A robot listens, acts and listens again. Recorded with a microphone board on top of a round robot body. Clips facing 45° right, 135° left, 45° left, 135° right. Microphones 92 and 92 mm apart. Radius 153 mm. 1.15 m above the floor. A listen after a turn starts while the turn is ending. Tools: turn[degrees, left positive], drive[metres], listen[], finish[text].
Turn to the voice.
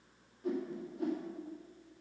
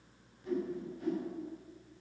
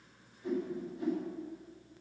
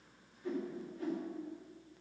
Action: listen[]
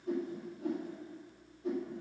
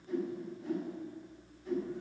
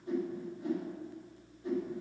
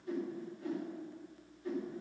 Action: listen[]
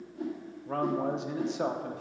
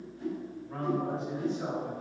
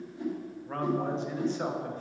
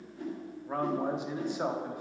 Thought: The man speaking: 55° right.
Action: turn[-55]
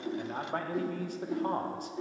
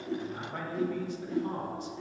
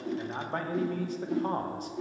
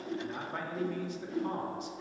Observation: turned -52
Action: finish[Facing the man speaking, under 1 m away.]